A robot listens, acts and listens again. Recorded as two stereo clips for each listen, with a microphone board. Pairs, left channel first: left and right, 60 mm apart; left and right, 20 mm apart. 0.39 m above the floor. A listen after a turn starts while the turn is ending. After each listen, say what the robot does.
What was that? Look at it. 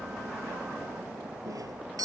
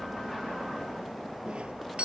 Turn 90° right.
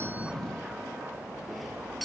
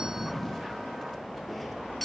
Keep listening.
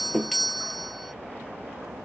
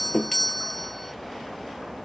Found it: a doorbell, straight ahead.